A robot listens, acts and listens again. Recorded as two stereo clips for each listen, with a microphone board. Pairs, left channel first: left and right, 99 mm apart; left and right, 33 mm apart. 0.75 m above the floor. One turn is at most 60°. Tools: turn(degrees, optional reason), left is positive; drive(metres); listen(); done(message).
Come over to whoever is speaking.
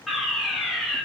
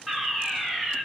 listen()
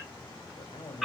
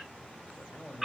turn(degrees=55, reason="The man speaking: about 55° left or 125° left.")
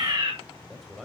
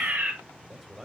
drive(metres=1.0)
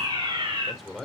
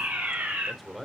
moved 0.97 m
drive(metres=1.0)
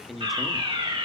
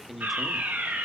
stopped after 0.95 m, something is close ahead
done("Arrived at the man speaking, straight ahead.")